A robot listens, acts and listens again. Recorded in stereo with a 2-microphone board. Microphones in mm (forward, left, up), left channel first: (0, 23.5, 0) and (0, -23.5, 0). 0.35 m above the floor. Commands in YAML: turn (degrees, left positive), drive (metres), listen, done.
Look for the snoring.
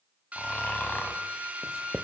turn: 40
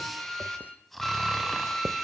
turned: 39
done: "Facing the snoring."